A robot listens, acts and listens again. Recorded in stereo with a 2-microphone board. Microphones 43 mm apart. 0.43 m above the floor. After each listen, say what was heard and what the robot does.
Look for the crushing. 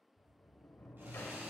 Keep listening.
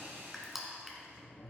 Turn 30° right.
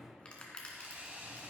So it is at 25° left. Turn 25° left.
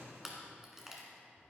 The crushing is now 10° right. Turn 10° right.
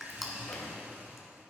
Found it: crushing, straight ahead.